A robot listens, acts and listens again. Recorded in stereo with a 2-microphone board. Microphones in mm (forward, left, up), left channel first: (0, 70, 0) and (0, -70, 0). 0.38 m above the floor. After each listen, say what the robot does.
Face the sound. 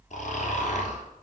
Turn 60° left.
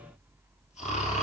Turn 55° left.
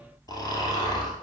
Turn 30° left.
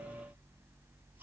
Keep listening.
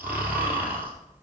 Turn 15° right.
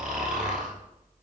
Facing the snoring.